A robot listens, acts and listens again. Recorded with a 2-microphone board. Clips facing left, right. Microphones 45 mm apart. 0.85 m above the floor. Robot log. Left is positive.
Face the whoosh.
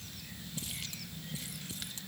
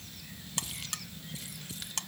cmd idle
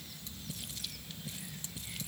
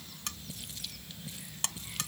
cmd idle
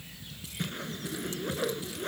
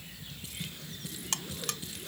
note: The whoosh: about 50° left or 130° left.
cmd yaw +50
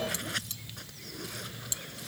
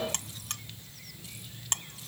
cmd idle
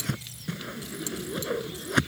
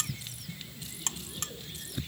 note: So it is at 80° left.
cmd yaw +80
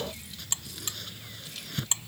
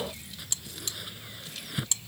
note: The whoosh is now 10° right.
cmd yaw -10
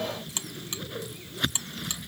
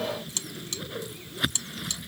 end: Facing the whoosh.